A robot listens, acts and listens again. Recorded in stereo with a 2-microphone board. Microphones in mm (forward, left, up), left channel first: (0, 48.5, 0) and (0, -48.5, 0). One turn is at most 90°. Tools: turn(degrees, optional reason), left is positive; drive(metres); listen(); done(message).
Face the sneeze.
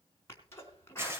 turn(degrees=30, reason="The sneeze: about 30° left or 150° left.")
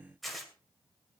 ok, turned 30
listen()
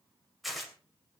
done("I heard a sneeze, but can't make it out now. It was about straight ahead or 120° left.")